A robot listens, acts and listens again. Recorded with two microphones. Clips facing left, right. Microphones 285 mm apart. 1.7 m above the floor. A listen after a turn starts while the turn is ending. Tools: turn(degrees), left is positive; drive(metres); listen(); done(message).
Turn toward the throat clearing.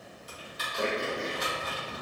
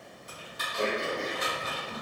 turn(degrees=20)
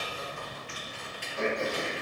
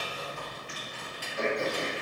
done("Found it: throat clearing, straight ahead.")